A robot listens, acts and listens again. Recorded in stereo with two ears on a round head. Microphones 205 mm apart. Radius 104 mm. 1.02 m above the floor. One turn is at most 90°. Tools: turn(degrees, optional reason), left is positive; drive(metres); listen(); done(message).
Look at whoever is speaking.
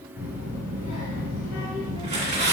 turn(degrees=90)
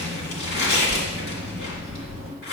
done("Facing the child speaking, 2 to 4 m away.")